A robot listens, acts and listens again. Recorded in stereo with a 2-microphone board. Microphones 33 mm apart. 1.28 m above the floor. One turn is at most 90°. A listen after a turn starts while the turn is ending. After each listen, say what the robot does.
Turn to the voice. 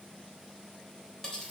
Keep listening.
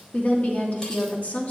Turn 50° left.
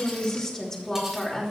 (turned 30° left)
Turn 20° left.
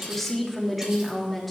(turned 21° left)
Facing the woman speaking.